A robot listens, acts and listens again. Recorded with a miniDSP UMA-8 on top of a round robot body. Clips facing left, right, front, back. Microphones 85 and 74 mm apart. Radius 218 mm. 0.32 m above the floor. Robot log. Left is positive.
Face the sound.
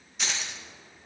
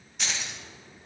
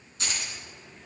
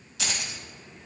note: The keys jangling: straight behind.
cmd yaw +180
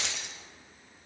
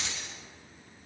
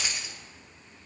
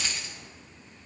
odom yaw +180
note: The keys jangling is now 75° left.
cmd yaw +75
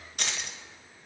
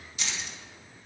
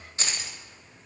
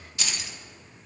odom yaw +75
note: The keys jangling is now 60° left.
cmd yaw +60
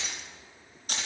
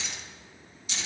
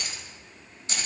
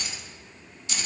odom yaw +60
note: The keys jangling is now 50° left.
cmd yaw +50
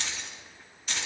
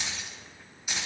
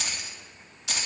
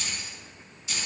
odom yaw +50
note: The keys jangling is now 10° right.
cmd yaw -10
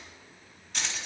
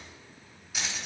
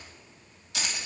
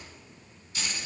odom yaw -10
note: The keys jangling is now 10° right.
cmd yaw -10
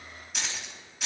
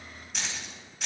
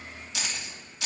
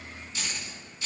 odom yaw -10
end: Found it: keys jangling, straight ahead, 2 to 4 m away.